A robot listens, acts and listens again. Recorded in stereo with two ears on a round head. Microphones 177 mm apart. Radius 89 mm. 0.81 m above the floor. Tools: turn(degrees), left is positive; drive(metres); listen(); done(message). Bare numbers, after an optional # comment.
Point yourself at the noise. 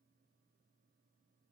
listen()
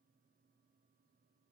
listen()
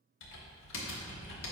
# The typing on a keyboard: about 70° left or 110° left.
turn(70)
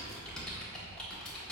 done("Found it: typing on a keyboard, straight ahead.")